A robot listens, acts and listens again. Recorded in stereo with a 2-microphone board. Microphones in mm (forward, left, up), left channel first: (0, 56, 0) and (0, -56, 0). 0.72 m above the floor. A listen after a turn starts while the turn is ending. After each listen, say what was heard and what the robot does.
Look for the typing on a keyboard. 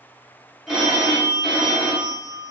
Keep listening.
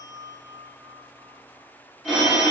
Keep listening.
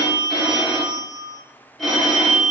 I can't make out typing on a keyboard, only a phone ringing.